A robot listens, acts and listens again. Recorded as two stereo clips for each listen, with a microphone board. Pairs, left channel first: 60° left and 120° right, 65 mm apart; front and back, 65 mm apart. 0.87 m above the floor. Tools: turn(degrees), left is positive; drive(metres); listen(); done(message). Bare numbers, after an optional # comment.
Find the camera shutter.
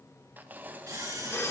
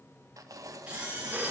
# The camera shutter: 110° right.
turn(-110)
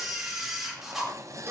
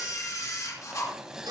# The camera shutter is now 35° right.
turn(-35)
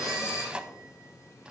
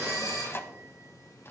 # The camera shutter is now 20° left.
turn(20)
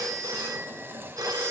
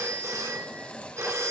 listen()
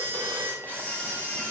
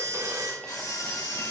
done("Found it: a camera shutter, straight ahead.")